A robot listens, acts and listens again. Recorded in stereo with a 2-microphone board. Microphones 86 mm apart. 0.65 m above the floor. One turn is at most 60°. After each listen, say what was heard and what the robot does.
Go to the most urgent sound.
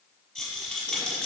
Keep listening.
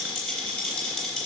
Keep listening.
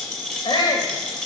The shout: about 65° left or 115° left. Turn 60° left.
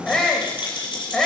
So it is at 10° left. Turn 10° left.
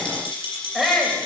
Drive 1.0 m forward.
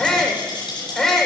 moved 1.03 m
Drive 1.0 m forward.
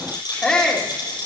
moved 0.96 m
The shout is now 10° left. Turn 10° left.
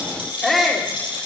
Drive 1.0 m forward.
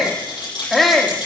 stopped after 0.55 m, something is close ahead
I am next to the shout.